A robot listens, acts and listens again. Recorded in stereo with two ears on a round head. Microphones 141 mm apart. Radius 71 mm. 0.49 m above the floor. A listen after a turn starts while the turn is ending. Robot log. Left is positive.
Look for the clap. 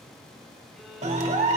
note: The clap: about 40° right or 140° right.
cmd yaw -40
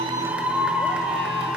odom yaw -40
note: So it is at 10° right.
cmd yaw -10
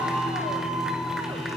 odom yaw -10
end: Facing the clap, 1 to 2 m away.